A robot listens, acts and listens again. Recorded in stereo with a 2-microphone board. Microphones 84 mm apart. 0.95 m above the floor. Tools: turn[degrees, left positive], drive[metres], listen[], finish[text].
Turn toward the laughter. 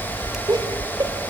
Thought: The laughter: about 60° right or 120° right.
Action: turn[-60]
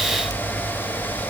Action: listen[]
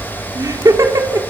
Thought: So it is at 40° right.
Action: turn[-40]
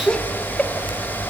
Thought: The laughter is now 15° left.
Action: turn[15]
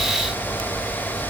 Action: listen[]
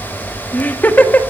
Thought: The laughter is now 20° left.
Action: turn[20]
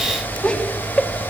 Thought: The laughter is now 15° left.
Action: turn[15]
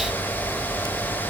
Action: listen[]
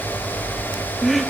Action: finish[Found it: laughter, straight ahead.]